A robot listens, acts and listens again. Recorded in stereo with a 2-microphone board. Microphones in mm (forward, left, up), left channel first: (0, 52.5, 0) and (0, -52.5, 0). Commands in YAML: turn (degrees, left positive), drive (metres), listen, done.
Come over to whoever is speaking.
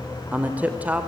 turn: -30
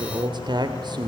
turn: -130
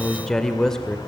drive: 1.0
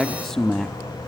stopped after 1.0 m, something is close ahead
done: "Arrived at the man speaking, straight ahead."